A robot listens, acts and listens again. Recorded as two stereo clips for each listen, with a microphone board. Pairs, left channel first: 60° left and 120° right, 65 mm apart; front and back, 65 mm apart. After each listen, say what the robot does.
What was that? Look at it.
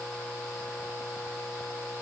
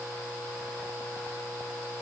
Keep listening.
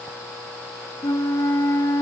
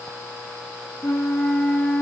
Turn 65° left.
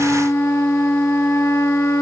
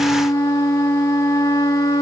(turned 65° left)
Turn 20° left.
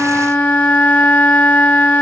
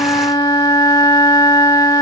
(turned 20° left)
Found it: a flute, straight ahead, 1 to 2 m away.